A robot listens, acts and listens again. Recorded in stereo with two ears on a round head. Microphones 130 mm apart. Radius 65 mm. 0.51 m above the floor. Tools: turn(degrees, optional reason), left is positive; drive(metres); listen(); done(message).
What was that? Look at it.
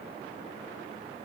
listen()
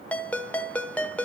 turn(degrees=30)
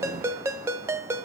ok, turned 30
turn(degrees=-20, reason="So it is at 20° right.")
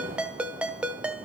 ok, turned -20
turn(degrees=-10, reason="The ringtone is now 10° right.")
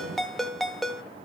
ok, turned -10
done("Found it: a ringtone, straight ahead.")